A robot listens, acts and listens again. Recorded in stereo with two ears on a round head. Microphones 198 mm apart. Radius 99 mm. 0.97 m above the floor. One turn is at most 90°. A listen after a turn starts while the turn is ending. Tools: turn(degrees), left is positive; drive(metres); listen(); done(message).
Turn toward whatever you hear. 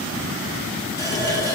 turn(degrees=15)
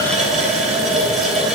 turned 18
done("Found it: a running tap, straight ahead, 2 to 4 m away.")